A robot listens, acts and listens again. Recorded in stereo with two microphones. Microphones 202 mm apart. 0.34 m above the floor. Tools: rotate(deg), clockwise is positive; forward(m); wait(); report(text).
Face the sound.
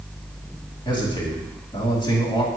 rotate(-25)
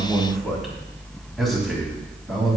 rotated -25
report("Facing the man speaking, 2 to 4 m away.")